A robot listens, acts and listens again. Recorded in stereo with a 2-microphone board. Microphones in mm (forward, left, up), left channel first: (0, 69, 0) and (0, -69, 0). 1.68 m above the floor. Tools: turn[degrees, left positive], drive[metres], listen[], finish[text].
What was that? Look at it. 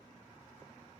Action: listen[]
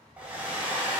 Action: turn[-30]
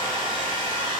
Thought: So it is at 140° right.
Action: turn[-140]
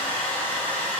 Thought: The hair dryer is now 10° left.
Action: turn[10]
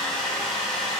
Action: finish[Found it: a hair dryer, straight ahead.]